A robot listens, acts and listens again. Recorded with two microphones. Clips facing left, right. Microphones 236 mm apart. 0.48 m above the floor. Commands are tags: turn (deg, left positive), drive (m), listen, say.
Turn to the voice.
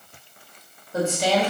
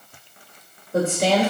<turn deg="-55"/>
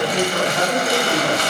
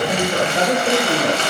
<turn deg="-50"/>
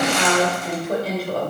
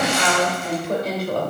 <say>Facing the woman speaking.</say>